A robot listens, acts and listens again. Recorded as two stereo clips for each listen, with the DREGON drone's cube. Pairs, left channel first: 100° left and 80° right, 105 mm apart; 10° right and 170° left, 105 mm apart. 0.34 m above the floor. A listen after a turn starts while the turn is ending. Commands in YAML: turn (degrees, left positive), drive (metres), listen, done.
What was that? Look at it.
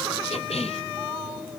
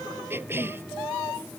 turn: 100
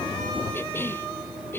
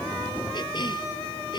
turn: 30
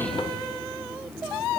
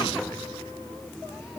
listen: true
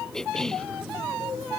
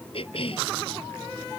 turn: 15
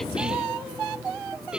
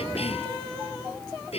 done: "Facing the cough."